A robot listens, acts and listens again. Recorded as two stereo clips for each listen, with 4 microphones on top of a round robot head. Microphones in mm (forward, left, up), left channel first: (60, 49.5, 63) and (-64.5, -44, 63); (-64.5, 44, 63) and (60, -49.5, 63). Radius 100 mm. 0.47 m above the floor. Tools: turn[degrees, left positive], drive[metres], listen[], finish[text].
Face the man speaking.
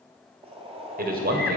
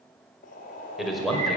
Thought: The man speaking: 125° right.
Action: turn[-125]
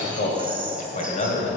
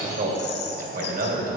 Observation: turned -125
Thought: The man speaking is now 10° right.
Action: turn[-10]
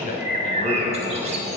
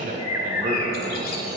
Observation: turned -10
Action: finish[Found it: a man speaking, straight ahead, 2 to 4 m away.]